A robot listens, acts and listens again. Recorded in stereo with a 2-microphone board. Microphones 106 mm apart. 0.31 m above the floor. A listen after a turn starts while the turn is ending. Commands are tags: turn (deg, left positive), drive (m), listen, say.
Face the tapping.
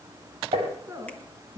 <turn deg="-65"/>
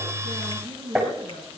<say>Found it: tapping, straight ahead.</say>